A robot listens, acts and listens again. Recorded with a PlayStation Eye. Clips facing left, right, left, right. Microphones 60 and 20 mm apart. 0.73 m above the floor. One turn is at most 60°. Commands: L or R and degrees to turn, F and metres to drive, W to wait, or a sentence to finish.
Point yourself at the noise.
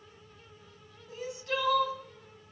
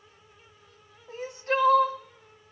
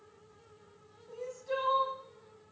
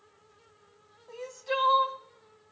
R40
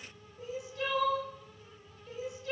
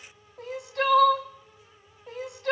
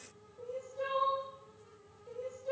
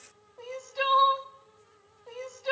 R60
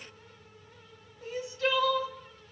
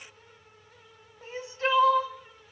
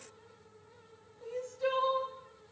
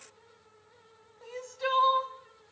R30
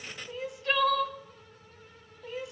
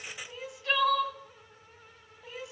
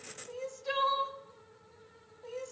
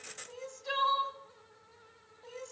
Found it: crying, straight ahead.